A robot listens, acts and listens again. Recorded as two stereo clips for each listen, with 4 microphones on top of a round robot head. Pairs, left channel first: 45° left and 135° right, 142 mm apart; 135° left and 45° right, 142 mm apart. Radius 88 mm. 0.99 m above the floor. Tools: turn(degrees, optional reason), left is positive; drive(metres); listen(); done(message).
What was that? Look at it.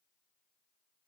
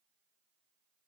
listen()
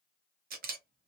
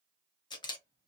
turn(degrees=-160, reason="The camera shutter: 160° right.")
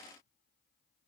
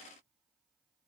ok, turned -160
listen()
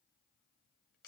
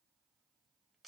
listen()
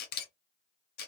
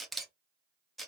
turn(degrees=50, reason="The camera shutter is now 50° left.")
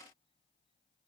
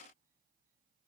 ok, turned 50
listen()
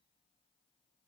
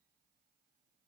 listen()
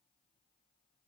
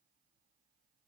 done("Facing where the camera shutter came from. I can't hear it now.")